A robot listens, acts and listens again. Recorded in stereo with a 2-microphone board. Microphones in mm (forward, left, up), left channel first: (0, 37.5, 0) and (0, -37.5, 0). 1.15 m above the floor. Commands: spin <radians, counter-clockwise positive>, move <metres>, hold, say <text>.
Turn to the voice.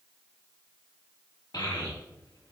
spin 1.13
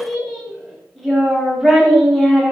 say Found it: a child speaking, straight ahead.